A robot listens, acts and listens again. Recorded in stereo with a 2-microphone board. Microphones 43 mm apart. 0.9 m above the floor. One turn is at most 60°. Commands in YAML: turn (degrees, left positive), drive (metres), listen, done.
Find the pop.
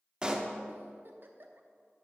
turn: -20
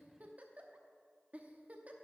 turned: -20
listen: true
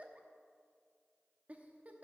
done: "I heard a pop, but can't make it out now. It was about straight ahead or 140° right."